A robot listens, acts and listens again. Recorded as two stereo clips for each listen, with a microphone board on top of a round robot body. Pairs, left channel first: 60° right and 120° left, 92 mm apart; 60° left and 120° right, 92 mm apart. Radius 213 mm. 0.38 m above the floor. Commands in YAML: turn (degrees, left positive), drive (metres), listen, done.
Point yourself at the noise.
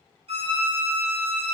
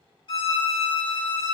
turn: 100
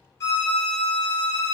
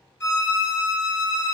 done: "Found it: a violin, straight ahead, 1 to 2 m away."